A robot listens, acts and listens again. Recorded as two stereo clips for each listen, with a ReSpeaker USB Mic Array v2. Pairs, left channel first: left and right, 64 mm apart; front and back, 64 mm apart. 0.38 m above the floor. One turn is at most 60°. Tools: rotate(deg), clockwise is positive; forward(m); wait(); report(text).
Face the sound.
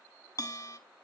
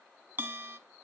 rotate(-60)
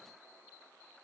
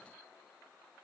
rotate(-60)
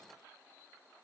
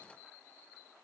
wait()
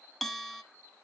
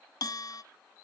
report("Facing the bell.")